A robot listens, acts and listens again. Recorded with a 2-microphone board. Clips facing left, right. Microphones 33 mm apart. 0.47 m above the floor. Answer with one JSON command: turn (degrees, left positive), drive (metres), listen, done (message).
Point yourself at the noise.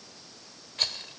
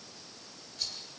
{"turn": 55}
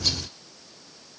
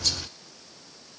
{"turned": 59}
{"listen": true}
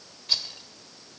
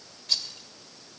{"turn": 20}
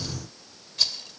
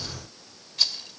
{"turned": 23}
{"done": "Facing the rattle."}